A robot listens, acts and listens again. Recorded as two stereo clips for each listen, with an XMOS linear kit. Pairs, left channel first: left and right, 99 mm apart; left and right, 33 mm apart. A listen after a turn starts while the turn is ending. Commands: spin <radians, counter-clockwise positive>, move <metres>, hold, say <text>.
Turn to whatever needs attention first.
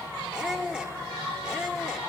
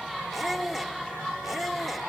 hold
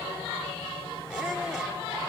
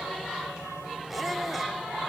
hold
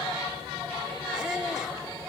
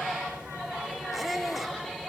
say I can't make out anything urgent to turn to.